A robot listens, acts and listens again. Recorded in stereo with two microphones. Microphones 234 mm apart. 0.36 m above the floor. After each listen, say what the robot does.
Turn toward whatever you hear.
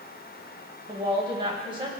Turn 20° right.
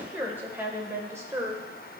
Turn 30° right.
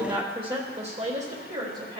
Turn 145° right.
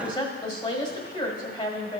Turn 30° left.
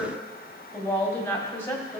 Turn 20° left.
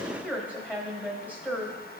Turn 10° left.
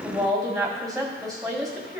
Found it: a woman speaking, straight ahead.